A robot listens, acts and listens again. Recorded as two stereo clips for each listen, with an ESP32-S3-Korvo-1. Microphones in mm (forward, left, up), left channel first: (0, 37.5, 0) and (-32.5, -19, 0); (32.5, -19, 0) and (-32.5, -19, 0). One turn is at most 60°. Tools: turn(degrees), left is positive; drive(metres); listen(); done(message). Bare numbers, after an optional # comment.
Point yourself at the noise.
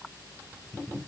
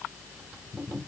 listen()
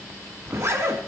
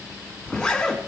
# The zipper: 80° right.
turn(-60)
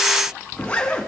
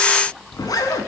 # The zipper is now 10° right.
turn(-10)
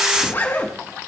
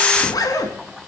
done("Facing the zipper, 1 to 2 m away.")